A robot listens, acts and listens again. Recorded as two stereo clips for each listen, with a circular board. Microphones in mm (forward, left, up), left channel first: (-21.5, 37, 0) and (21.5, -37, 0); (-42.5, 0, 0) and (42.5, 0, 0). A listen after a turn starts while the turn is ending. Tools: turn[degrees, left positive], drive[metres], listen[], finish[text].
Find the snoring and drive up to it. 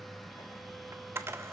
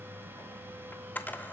Action: listen[]
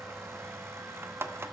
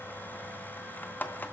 Action: listen[]
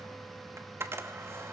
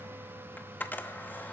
Action: finish[I can't make out snoring, only a camera shutter.]